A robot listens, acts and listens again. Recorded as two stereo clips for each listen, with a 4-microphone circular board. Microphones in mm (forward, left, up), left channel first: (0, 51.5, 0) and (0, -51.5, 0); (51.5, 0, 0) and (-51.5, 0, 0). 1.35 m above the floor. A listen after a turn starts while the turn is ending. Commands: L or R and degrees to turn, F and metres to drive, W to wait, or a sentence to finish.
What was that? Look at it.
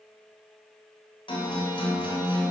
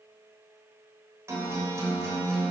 L120
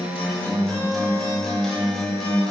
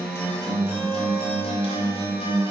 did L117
Facing the guitar.